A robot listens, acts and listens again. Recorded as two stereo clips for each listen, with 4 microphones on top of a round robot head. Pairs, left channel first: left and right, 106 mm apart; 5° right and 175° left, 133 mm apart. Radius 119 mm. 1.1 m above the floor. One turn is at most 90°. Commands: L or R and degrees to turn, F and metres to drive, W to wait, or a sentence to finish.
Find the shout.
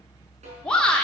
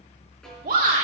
L90
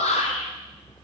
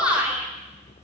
L90
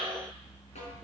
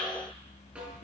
W
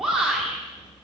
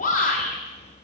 Facing the shout, 2 to 4 m away.